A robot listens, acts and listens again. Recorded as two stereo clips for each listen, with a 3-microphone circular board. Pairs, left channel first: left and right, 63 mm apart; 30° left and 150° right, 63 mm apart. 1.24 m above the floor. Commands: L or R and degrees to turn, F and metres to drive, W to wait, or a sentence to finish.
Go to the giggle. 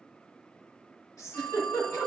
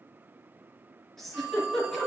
L115
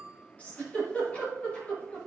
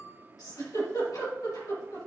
L25
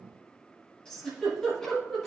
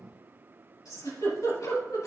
L10
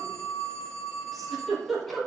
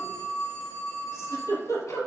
F1.0
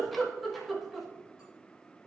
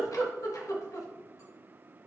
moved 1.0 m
F1.0
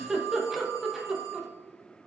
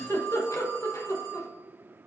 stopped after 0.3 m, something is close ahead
I am next to the giggle.